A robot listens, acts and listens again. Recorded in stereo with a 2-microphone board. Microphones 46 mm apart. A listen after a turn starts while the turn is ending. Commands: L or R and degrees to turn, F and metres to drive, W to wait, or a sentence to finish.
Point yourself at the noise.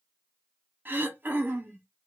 R45
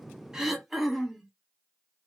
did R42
Found it: throat clearing, straight ahead.